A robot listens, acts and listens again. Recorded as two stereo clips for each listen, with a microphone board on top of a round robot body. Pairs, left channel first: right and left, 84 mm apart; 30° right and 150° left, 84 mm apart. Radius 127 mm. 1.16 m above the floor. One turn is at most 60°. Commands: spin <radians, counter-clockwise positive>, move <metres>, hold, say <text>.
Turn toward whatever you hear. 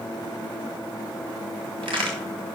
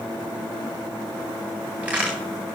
spin 1.05
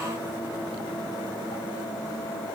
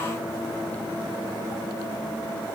spin 0.26
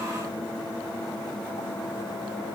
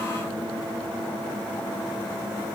say Facing where the crack came from. I can't hear it now.